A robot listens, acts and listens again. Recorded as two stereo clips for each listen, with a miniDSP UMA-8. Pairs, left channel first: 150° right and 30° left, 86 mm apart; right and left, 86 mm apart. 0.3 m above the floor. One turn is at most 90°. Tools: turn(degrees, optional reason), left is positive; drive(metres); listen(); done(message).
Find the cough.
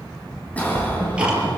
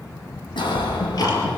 turn(degrees=-80, reason="The cough: 80° right.")
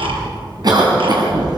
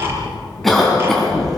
done("Found it: a cough, straight ahead.")